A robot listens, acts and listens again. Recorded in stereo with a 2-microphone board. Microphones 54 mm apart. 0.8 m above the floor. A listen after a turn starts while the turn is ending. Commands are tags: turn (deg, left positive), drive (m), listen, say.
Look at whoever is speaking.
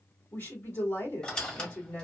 <turn deg="45"/>
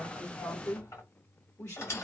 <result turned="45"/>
<turn deg="85"/>
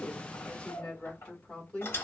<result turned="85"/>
<turn deg="20"/>
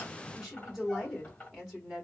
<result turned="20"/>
<say>Facing the woman speaking, 2 to 4 m away.</say>